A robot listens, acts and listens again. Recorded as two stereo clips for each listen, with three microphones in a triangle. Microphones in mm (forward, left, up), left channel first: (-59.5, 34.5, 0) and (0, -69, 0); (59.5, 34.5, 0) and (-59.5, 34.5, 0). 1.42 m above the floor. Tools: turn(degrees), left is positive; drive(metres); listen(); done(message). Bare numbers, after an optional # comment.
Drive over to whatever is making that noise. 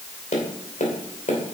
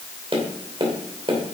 # The tapping: 135° left.
turn(135)
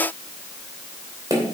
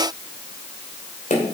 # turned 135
drive(1.0)
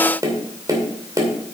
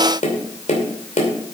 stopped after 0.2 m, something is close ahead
done("Something is in my way. I am facing the tapping but have not reached it.")